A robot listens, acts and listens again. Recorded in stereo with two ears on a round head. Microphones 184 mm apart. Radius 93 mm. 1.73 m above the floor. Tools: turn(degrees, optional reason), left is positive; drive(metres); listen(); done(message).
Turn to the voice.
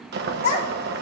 turn(degrees=30, reason="The child speaking: about 30° left or 150° left.")
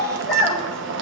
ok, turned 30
done("Facing the child speaking.")